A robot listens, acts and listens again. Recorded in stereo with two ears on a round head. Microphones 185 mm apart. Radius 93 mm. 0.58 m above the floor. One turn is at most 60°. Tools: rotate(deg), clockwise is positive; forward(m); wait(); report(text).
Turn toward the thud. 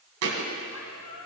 rotate(60)
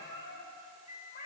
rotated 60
rotate(30)
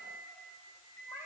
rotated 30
report("Facing where the thud came from. I can't hear it now.")